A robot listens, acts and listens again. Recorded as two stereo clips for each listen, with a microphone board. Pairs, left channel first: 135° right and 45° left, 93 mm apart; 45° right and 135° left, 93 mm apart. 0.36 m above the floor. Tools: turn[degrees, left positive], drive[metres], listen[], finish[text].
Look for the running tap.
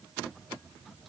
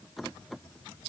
Action: listen[]
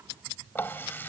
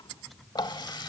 Thought: The running tap: 70° right.
Action: turn[-70]
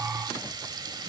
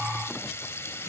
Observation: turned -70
Thought: The running tap is now 15° left.
Action: turn[15]
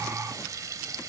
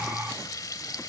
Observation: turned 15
Action: finish[Found it: a running tap, straight ahead.]